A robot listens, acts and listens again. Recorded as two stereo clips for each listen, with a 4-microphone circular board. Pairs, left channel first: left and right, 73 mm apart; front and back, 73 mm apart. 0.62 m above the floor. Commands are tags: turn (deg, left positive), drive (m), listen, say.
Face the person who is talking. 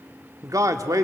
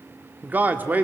<turn deg="-120"/>
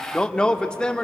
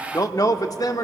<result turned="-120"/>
<turn deg="15"/>
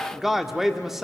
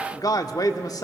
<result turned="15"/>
<say>Facing the man speaking, 1 to 2 m away.</say>